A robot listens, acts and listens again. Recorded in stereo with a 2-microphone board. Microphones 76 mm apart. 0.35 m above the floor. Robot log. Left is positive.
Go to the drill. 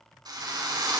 note: The drill: about 70° right or 110° right.
cmd yaw -70
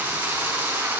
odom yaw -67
note: So it is at 30° right.
cmd yaw -30
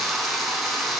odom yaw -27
cmd fwd 1.0
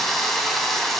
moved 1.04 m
cmd fwd 1.0
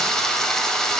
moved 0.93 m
note: The drill is now 10° left.
cmd yaw +10
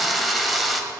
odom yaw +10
cmd fwd 1.0
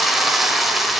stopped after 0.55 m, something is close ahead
end: Arrived at the drill, straight ahead.